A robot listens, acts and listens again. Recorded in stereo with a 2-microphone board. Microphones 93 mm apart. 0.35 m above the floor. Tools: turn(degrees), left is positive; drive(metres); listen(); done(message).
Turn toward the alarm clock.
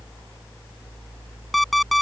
turn(degrees=30)
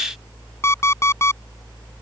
turn(degrees=150)
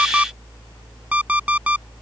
turn(degrees=-15)
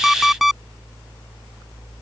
done("Facing the alarm clock.")